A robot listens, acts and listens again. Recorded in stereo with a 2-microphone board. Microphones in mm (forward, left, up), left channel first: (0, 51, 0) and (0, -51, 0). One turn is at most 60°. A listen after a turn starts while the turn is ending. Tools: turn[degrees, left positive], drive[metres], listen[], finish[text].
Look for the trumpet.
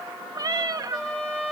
Action: turn[30]
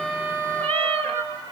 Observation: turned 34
Thought: So it is at 25° right.
Action: turn[-25]
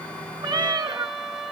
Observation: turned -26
Action: finish[Facing the trumpet.]